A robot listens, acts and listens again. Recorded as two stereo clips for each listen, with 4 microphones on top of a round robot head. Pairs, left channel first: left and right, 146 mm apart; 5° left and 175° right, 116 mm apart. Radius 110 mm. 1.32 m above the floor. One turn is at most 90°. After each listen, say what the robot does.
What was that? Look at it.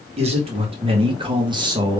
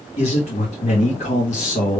Turn 25° right.
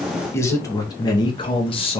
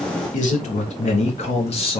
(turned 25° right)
Turn 40° left.
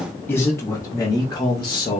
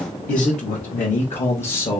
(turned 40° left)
Turn 35° left.
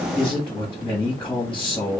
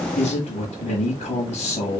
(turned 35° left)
Turn 10° left.
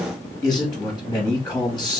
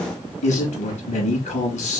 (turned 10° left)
Found it: a man speaking, straight ahead, 1 to 2 m away.